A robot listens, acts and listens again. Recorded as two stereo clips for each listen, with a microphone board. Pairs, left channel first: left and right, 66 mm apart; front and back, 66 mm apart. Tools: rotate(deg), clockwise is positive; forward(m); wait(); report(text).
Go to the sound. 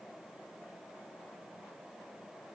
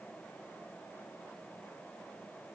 wait()
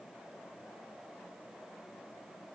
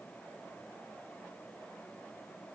wait()
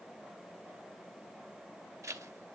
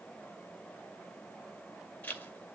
rotate(65)
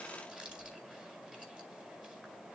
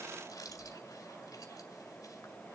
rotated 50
rotate(15)
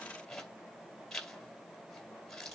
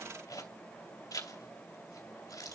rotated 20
forward(1.0)
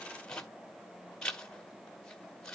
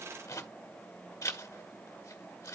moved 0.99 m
rotate(-10)
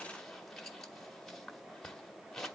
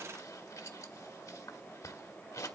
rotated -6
forward(1.0)
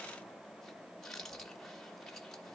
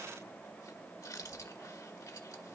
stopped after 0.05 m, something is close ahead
report("I am next to the zipper.")